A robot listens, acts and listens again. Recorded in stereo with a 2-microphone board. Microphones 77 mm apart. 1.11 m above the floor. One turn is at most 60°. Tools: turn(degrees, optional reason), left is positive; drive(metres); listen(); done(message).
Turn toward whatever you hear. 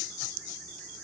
listen()
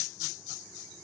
listen()
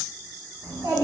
turn(degrees=-60, reason="The child speaking: about 60° right or 120° right.")
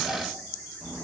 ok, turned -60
done("Facing the child speaking.")